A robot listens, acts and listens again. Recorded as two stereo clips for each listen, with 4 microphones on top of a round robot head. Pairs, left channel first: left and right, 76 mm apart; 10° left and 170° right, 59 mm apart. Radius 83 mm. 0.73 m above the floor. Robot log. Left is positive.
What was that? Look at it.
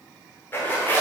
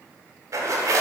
note: The zipper: 155° left.
cmd yaw +155
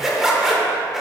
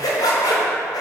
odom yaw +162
end: Facing the zipper, 1 to 2 m away.